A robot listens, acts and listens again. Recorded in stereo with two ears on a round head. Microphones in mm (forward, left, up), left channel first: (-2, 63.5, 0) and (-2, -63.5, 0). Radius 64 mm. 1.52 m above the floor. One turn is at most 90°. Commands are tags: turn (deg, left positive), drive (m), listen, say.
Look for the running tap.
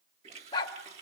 <turn deg="-45"/>
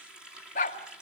<say>Found it: a running tap, straight ahead.</say>